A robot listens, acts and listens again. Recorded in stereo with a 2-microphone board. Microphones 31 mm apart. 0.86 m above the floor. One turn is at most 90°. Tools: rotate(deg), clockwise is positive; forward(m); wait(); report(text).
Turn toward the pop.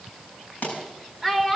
rotate(-65)
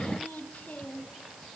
wait()
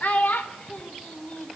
report("I heard a pop, but can't make it out now. It was about straight ahead or 50° left.")